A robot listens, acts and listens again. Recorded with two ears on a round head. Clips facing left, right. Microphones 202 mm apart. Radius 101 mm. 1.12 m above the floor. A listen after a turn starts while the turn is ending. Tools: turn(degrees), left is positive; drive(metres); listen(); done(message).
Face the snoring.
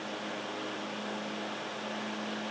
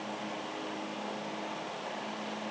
listen()
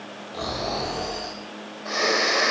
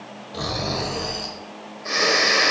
turn(degrees=-40)
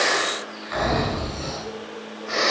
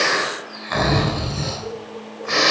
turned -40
turn(degrees=-105)
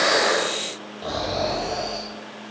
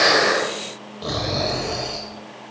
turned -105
turn(degrees=-30)
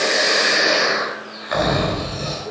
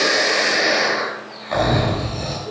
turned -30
turn(degrees=15)
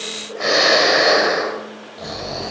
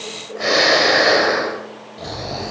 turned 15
done("Found it: snoring, straight ahead, 2 to 4 m away.")